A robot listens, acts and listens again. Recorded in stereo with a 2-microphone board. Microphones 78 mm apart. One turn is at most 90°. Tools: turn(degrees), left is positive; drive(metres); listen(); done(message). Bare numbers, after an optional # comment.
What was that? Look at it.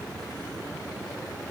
listen()
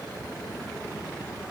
listen()
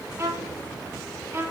# The violin: about 40° right or 140° right.
turn(-40)
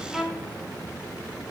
done("Found it: a violin, straight ahead, 1 to 2 m away.")